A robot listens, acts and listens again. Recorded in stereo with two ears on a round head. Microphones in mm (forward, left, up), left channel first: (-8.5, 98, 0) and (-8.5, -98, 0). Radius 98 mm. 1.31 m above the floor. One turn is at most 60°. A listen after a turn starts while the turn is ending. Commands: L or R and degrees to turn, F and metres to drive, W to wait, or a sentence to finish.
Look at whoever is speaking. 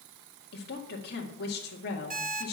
L50
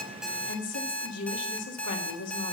L60
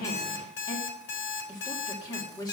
L20
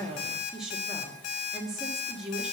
Facing the woman speaking.